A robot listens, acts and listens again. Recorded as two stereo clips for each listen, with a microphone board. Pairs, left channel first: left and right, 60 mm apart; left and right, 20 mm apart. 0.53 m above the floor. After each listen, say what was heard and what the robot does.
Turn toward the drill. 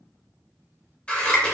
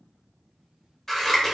Keep listening.
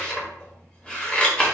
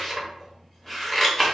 Keep listening.
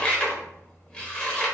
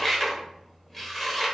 I can't make out a drill to turn to.